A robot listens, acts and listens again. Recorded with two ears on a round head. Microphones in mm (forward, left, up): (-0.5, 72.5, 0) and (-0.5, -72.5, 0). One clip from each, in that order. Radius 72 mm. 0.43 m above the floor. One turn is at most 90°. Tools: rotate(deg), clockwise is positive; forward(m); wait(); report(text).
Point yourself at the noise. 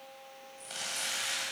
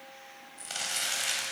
rotate(30)
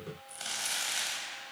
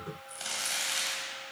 report("Facing the crumpling.")